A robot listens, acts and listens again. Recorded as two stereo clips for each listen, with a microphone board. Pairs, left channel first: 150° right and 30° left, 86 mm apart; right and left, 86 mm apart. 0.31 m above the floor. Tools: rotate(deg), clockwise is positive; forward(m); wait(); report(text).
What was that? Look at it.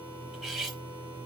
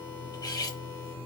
rotate(55)
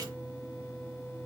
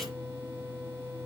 wait()
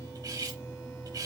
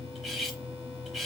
report("Found it: cutlery clinking, straight ahead, under 1 m away.")